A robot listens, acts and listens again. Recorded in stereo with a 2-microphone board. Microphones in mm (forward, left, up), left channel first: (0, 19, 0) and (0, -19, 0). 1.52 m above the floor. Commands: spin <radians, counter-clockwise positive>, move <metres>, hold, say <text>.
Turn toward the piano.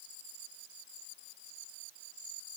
hold
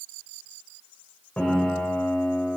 spin 0.70
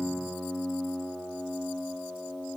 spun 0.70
say Facing the piano.